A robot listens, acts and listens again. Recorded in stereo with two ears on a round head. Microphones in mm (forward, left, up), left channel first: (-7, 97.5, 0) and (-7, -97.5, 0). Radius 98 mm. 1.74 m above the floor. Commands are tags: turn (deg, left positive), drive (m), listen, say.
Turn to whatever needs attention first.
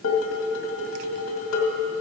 <listen/>
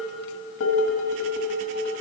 <listen/>
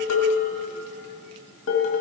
<say>I can't make out anything urgent to turn to.</say>